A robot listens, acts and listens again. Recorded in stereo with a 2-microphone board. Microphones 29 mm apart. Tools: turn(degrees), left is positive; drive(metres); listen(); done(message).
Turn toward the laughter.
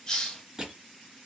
listen()
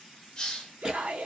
turn(degrees=-55)
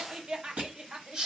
turn(degrees=-40)
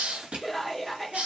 done("Found it: laughter, straight ahead, under 1 m away.")